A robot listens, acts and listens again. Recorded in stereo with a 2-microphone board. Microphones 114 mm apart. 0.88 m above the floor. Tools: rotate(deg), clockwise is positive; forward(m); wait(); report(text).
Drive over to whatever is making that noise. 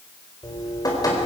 rotate(-35)
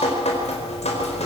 rotate(-110)
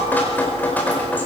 rotate(-15)
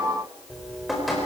forward(1.0)
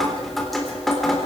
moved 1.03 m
forward(1.0)
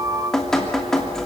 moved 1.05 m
forward(1.0)
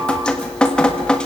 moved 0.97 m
rotate(-10)
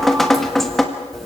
forward(1.0)
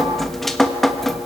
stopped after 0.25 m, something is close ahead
report("I am next to the dripping.")